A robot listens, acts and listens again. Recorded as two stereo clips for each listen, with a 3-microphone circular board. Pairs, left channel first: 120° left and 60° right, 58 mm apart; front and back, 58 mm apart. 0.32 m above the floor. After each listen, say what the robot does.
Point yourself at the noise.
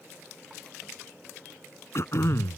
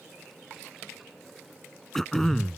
Turn 85° left.
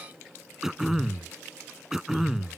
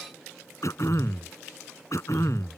Turn 20° left.
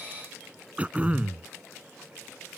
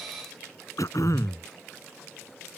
Facing the throat clearing.